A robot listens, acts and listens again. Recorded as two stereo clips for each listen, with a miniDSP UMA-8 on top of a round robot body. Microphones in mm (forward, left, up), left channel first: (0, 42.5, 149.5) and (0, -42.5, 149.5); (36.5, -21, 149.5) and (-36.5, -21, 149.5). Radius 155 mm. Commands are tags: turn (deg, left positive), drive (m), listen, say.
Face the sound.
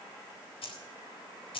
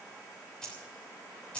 <turn deg="75"/>
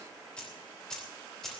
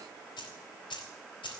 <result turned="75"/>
<say>Found it: keys jangling, straight ahead, 2 to 4 m away.</say>